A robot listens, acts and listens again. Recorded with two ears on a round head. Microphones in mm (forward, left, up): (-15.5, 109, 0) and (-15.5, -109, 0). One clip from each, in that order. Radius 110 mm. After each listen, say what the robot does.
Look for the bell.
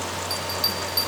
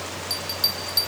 Turn 30° right.
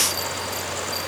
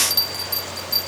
Turn 140° right.
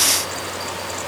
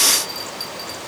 Keep listening.
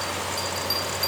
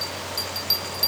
Turn 15° right.
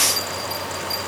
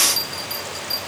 Facing the bell, 2 to 4 m away.